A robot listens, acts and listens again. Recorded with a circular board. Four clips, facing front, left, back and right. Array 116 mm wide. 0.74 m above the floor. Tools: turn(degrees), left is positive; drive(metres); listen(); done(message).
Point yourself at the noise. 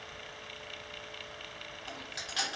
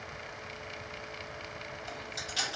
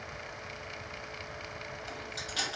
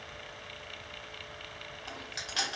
turn(degrees=-70)
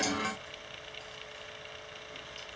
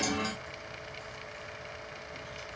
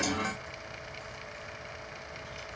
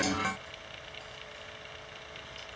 listen()
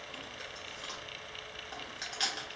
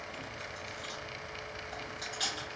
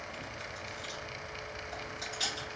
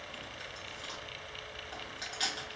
turn(degrees=-20)
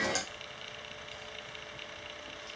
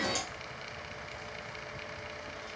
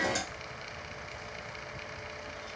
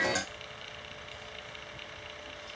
listen()
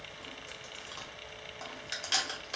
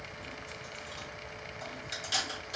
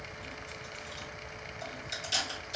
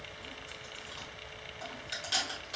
done("Facing the chewing.")